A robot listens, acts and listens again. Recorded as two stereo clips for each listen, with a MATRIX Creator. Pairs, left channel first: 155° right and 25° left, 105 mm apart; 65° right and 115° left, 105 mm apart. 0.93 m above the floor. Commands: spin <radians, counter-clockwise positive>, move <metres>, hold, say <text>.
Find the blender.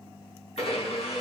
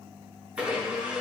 spin -2.97
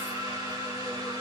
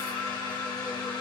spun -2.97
spin -0.35
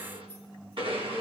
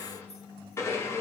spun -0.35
say Facing the blender.